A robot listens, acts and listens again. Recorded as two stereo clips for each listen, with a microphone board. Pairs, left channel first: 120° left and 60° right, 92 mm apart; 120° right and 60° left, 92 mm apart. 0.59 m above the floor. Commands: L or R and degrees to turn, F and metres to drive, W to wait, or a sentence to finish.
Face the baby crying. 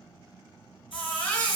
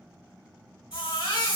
R165
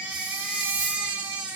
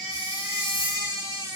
L15
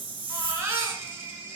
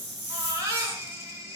Facing the baby crying.